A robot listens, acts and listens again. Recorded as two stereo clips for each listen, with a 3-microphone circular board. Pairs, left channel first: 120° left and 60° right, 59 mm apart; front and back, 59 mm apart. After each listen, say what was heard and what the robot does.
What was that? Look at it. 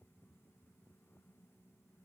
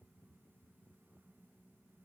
Keep listening.
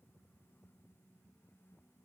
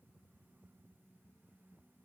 Keep listening.
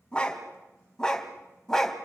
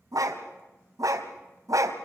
The dog barking: 160° right. Turn 160° right.
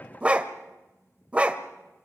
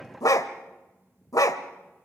Facing the dog barking, 1 to 2 m away.